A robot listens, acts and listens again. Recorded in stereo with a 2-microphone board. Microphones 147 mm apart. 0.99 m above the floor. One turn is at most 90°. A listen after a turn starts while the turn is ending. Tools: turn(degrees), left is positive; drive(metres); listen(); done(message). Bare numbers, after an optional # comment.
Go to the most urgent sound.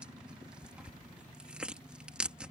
listen()
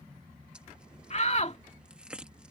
# The shout: about 50° left or 130° left.
turn(50)
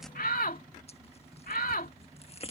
# So it is at 80° left.
turn(80)
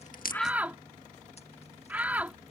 # The shout is now 10° right.
turn(-10)
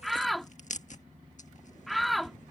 drive(1.0)
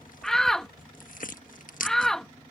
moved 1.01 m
drive(1.0)
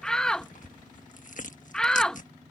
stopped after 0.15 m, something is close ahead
done("Arrived at the shout, straight ahead.")